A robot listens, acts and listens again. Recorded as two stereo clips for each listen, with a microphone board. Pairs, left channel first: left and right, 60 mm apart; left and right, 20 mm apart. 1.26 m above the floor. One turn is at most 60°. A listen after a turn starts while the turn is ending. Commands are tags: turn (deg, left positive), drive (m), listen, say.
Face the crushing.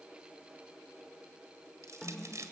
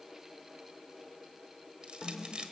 <turn deg="-55"/>
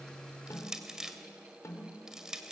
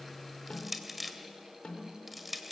<turn deg="-10"/>
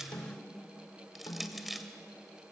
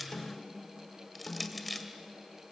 <say>Found it: crushing, straight ahead.</say>